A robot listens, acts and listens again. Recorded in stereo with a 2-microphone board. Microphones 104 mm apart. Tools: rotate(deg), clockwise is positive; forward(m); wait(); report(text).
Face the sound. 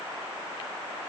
wait()
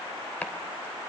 rotate(-30)
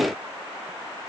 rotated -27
wait()
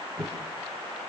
rotate(15)
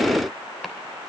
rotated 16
wait()
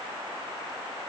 wait()
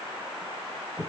report("Found it: chopping, straight ahead.")